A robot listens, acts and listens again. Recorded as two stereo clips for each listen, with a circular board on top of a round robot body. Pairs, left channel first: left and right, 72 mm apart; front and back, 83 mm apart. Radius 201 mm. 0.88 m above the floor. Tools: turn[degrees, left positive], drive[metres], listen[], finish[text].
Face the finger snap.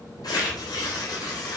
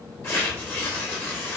Action: listen[]
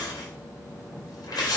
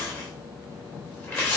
Action: listen[]
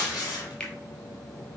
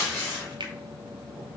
Thought: The finger snap: 165° left.
Action: turn[165]
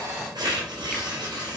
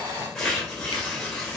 Action: listen[]
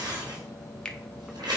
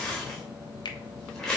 Thought: The finger snap is now 15° left.
Action: turn[15]
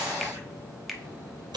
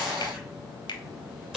Action: finish[Found it: a finger snap, straight ahead, 1 to 2 m away.]